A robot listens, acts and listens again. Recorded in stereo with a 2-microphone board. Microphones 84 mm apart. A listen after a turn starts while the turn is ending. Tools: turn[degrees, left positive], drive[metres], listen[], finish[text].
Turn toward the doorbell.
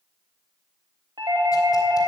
Thought: The doorbell: about 60° right or 120° right.
Action: turn[-60]
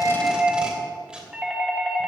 Thought: So it is at 10° right.
Action: turn[-10]
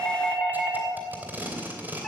Action: finish[Found it: a doorbell, straight ahead.]